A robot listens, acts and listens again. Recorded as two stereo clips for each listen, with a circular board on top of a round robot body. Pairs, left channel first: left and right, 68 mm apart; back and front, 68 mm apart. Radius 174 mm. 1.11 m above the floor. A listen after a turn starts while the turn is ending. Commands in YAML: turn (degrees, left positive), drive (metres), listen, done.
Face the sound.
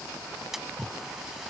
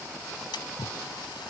turn: -175
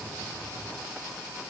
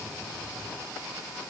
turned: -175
done: "I heard a splash from this way, but can't make it out now."